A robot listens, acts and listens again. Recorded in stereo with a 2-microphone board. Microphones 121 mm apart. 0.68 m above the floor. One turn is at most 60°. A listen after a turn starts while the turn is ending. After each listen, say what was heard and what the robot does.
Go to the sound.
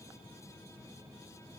Keep listening.
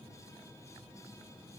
Keep listening.
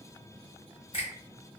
The finger snap: about 55° left or 125° left. Turn 55° left.
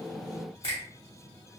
So it is at 65° left. Turn 60° left.
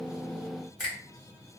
Drive 1.0 m forward.
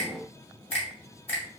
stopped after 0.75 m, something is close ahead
The finger snap is now 15° left. Turn 15° left.
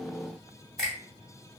I am next to the finger snap.